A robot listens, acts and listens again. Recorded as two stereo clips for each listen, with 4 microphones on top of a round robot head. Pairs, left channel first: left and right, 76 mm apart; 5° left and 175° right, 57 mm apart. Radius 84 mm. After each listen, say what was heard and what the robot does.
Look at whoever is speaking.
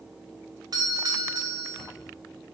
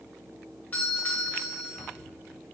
Keep listening.
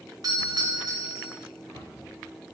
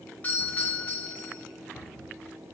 Keep listening.
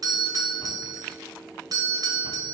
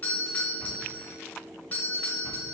I can't make out anyone speaking to turn to.